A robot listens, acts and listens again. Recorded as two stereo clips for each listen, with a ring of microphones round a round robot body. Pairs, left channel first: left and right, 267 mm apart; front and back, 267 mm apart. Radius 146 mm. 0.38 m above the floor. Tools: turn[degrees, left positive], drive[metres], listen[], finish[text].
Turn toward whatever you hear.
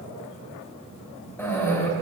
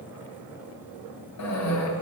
Thought: The cough: 10° left.
Action: turn[10]
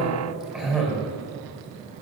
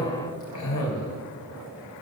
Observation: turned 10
Action: finish[Facing the cough, 2 to 4 m away.]